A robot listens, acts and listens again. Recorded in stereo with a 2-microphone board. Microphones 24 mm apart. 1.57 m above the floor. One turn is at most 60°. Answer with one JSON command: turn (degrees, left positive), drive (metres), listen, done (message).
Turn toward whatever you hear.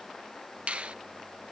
{"turn": -60}
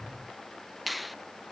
{"done": "Found it: a finger snap, straight ahead."}